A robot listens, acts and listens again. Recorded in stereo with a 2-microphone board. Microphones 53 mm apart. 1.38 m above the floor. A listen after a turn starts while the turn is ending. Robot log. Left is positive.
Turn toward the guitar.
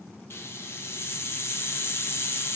cmd idle
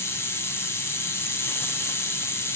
cmd idle
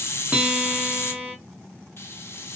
note: The guitar: about 25° right or 155° right.
cmd yaw -25
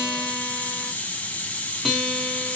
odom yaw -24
end: Found it: a guitar, straight ahead, under 1 m away.